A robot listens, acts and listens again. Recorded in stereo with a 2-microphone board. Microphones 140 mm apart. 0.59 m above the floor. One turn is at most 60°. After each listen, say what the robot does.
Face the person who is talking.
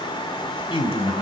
Turn 40° left.
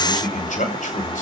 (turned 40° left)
Turn 60° left.
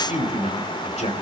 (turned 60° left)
Turn 60° left.
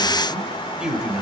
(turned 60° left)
Found it: a man speaking, straight ahead, 2 to 4 m away.